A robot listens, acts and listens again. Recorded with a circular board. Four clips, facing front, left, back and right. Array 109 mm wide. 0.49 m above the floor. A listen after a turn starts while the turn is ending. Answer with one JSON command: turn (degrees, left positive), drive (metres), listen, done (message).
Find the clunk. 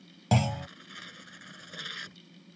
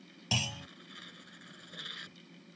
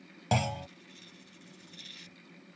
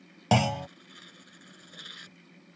{"turn": -90}
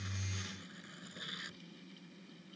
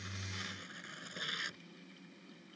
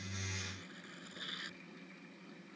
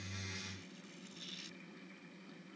{"done": "Facing where the clunk came from. I can't hear it now."}